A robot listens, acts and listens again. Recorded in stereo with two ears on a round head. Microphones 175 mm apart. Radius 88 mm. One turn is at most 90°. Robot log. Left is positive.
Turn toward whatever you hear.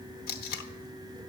note: The tape being pulled: about 50° left or 130° left.
cmd yaw +50
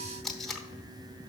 end: Facing the tape being pulled, under 1 m away.